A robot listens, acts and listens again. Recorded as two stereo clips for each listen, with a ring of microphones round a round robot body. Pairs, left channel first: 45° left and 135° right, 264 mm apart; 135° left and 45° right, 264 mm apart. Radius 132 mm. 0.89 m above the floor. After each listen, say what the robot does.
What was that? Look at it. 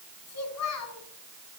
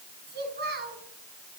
Turn 10° left.
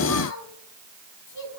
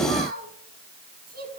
Turn 15° left.
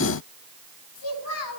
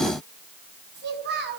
Turn 10° left.
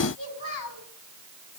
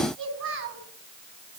Facing the child speaking.